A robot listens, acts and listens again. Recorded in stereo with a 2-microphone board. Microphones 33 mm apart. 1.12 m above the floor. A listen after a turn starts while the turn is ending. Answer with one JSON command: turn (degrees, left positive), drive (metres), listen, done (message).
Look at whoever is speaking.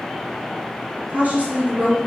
{"turn": -50}
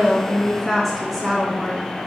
{"done": "Found it: a woman speaking, straight ahead, 2 to 4 m away."}